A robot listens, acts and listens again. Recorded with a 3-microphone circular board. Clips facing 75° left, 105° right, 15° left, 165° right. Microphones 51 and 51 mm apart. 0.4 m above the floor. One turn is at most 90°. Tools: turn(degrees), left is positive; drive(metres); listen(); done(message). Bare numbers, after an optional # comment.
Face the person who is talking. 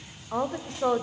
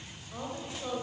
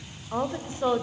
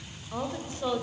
# The woman speaking: 75° left.
turn(75)
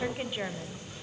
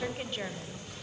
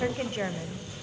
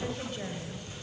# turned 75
done("Found it: a woman speaking, straight ahead.")